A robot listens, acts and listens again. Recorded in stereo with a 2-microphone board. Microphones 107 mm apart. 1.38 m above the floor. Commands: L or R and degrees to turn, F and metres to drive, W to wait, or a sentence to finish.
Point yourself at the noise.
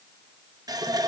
R40
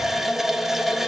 Found it: a running tap, straight ahead, 1 to 2 m away.